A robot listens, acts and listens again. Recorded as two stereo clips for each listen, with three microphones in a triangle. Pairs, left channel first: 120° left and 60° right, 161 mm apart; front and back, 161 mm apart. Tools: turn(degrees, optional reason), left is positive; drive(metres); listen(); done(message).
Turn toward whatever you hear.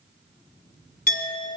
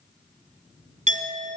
turn(degrees=140, reason="The clink: 140° left.")
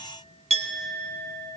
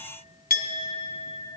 turn(degrees=-15, reason="The clink is now 15° right.")
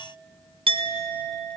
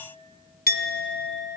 done("Facing the clink, 1 to 2 m away.")